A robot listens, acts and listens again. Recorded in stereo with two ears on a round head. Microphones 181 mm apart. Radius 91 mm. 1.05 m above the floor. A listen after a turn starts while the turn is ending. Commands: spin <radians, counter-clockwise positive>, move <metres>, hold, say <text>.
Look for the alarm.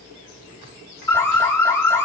spin 0.52
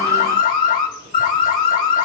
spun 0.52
spin 2.36
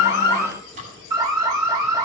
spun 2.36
spin -0.35
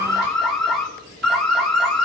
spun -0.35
say Facing the alarm, 1 to 2 m away.